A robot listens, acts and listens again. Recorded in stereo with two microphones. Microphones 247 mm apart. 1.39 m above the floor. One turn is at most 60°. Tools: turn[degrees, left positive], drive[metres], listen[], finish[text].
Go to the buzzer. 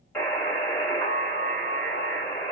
Action: turn[30]
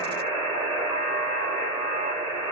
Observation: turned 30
Thought: So it is at 20° right.
Action: turn[-20]
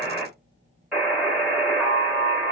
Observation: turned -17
Action: drive[1.0]
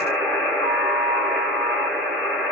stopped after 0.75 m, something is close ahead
Action: finish[I am next to the buzzer.]